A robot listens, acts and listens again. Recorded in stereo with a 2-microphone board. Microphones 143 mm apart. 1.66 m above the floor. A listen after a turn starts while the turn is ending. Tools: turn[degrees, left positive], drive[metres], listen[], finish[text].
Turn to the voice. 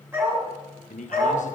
Thought: The man speaking: about 60° left or 120° left.
Action: turn[60]
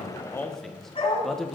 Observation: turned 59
Action: finish[Found it: a man speaking, straight ahead.]